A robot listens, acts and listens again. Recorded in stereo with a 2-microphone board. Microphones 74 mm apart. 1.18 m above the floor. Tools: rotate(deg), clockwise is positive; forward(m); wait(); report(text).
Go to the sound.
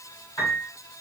rotate(-65)
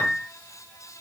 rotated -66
rotate(-35)
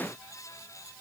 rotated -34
wait()
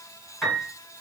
forward(1.0)
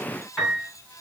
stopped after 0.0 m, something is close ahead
report("Blocked. The piano is further on, straight ahead.")